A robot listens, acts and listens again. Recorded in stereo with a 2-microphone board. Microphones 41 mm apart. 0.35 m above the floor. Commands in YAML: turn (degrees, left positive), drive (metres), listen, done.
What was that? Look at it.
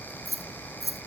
turn: -30
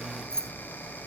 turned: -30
turn: 15
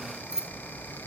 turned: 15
turn: -15
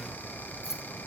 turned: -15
listen: true
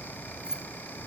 turn: -15
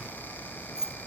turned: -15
turn: -15
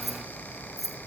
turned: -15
done: "Facing the keys jangling."